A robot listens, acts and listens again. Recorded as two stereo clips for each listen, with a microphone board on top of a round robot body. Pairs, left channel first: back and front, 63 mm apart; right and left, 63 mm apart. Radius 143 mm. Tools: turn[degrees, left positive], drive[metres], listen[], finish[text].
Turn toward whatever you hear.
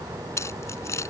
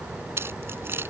Thought: The keys jangling: 140° left.
Action: turn[140]
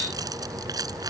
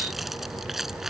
Action: finish[Facing the keys jangling.]